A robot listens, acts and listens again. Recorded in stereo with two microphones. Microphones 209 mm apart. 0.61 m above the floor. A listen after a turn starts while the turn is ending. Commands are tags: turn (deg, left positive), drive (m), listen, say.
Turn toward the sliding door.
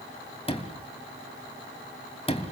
<turn deg="30"/>
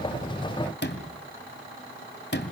<turn deg="120"/>
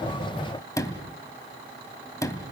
<turn deg="15"/>
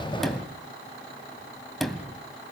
<say>Facing the sliding door, 2 to 4 m away.</say>